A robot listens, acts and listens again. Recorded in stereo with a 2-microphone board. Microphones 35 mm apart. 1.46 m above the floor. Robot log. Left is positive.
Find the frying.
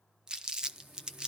note: The frying: about 50° right or 130° right.
cmd yaw -50
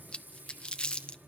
note: So it is at 80° right.
cmd yaw -80
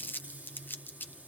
note: The frying is now 40° right.
cmd yaw -40
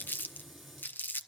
end: Found it: frying, straight ahead.